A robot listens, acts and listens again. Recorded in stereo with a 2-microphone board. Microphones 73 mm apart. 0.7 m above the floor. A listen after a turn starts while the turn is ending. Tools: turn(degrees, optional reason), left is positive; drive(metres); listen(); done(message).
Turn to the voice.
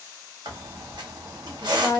turn(degrees=25, reason="The woman speaking: about 25° left or 155° left.")
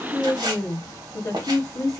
turn(degrees=125, reason="So it is at 125° left.")
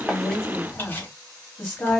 turn(degrees=20, reason="The woman speaking is now 20° left.")
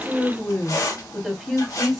done("Facing the woman speaking.")